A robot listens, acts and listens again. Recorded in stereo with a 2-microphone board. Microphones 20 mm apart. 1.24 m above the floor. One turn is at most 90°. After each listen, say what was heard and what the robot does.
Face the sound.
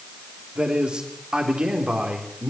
The man speaking: about 50° right or 130° right. Turn 50° right.
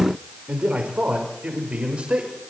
So it is at 85° right. Turn 85° right.
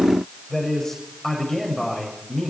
The man speaking is now 20° left. Turn 20° left.
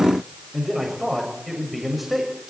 Facing the man speaking, over 4 m away.